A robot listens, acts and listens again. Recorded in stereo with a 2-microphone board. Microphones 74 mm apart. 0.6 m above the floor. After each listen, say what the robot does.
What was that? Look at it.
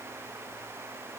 Keep listening.
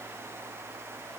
Keep listening.
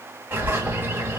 Turn 25° right.
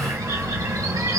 Turn 120° right.
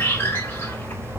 Turn 30° left.
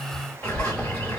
Turn 20° left.
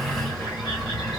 Facing the bird, 2 to 4 m away.